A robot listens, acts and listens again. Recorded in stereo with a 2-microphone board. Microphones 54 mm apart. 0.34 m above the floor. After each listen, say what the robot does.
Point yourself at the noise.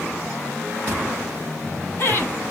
Turn 50° left.
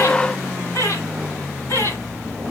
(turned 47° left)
Turn 65° left.
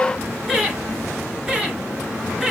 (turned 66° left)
Found it: laughter, straight ahead.